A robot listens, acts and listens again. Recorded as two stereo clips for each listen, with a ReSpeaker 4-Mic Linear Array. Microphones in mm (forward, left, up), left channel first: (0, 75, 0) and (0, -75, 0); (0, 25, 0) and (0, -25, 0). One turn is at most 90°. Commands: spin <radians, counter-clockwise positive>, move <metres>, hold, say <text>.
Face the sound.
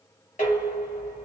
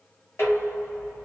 spin 1.05
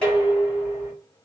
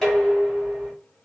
spin 0.17
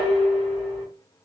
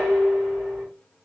say Found it: dishes clattering, straight ahead.